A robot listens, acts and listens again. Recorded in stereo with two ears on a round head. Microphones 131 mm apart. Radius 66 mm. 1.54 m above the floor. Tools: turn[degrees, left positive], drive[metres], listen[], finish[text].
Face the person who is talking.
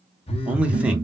Action: turn[-30]
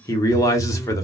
Thought: So it is at 20° left.
Action: turn[20]
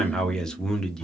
Action: finish[Facing the man speaking.]